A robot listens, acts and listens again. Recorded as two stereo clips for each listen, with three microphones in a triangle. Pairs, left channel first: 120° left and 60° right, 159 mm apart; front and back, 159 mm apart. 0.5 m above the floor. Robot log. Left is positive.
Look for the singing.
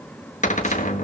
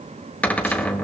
cmd idle
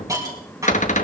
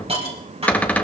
cmd idle
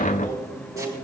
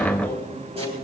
note: The singing: 120° left.
cmd yaw +120
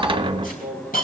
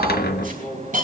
note: The singing is now 35° left.
cmd yaw +35
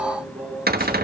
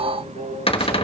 note: The singing is now 15° right.
cmd yaw -15
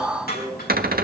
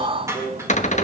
end: Facing the singing, over 4 m away.